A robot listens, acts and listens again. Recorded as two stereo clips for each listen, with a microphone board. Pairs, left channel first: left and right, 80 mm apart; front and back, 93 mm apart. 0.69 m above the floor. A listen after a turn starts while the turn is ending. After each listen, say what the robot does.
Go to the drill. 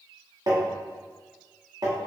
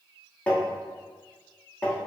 Keep listening.
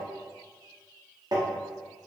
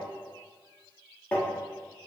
Keep listening.
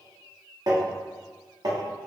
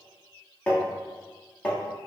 I can't make out a drill to turn to.